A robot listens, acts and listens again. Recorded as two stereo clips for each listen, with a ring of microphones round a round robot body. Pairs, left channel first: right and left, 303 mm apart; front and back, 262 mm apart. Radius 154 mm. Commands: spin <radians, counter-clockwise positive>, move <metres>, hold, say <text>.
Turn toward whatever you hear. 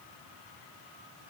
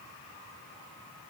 hold
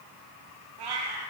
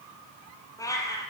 spin 1.40
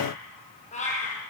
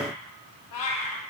spin -0.35
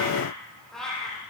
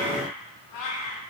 say Facing the cat meowing.